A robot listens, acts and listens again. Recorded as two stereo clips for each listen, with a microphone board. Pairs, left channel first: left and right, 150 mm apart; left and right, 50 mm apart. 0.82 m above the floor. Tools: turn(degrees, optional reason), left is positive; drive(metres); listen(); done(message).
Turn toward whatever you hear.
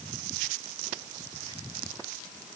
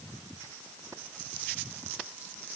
listen()
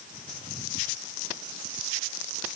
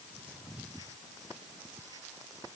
listen()
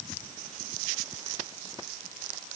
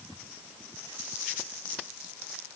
done("I can't make out anything.")